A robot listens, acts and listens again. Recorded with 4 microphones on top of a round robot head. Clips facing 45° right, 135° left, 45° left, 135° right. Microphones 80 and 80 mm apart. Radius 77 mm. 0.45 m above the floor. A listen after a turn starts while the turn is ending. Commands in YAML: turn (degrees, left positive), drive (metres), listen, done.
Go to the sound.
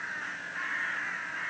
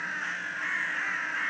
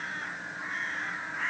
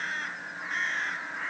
listen: true
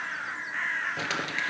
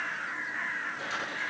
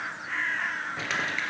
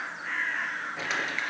turn: -45
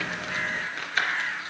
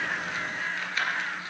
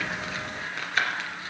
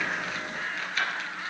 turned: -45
drive: 1.0
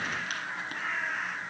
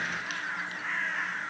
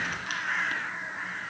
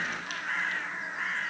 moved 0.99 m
listen: true
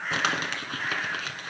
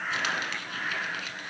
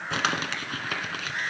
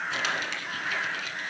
drive: 1.0
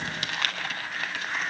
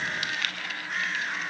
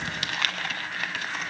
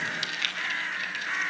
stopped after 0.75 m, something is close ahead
done: "Arrived at the crumpling, straight ahead."